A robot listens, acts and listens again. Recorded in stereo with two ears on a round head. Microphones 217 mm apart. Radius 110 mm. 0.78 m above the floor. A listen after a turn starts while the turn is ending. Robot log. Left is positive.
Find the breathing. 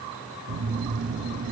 cmd idle
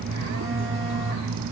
cmd idle
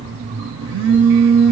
end: I can't make out breathing to turn to.